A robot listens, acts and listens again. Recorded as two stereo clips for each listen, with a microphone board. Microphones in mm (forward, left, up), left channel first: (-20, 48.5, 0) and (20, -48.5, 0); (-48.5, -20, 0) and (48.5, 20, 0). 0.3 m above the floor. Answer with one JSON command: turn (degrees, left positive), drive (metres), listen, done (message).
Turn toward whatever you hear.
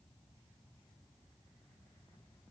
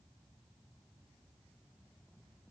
{"listen": true}
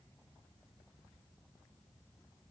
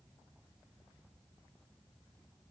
{"listen": true}
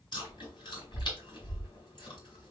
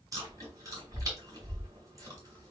{"turn": 75}
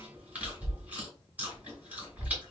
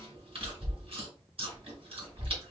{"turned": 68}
{"done": "Found it: chewing, straight ahead, 1 to 2 m away."}